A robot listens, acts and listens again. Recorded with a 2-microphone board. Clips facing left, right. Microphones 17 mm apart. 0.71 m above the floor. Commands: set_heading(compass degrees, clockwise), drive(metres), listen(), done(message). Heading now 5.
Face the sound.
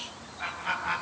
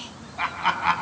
set_heading(95)
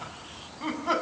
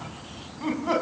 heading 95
done("Facing the laughter.")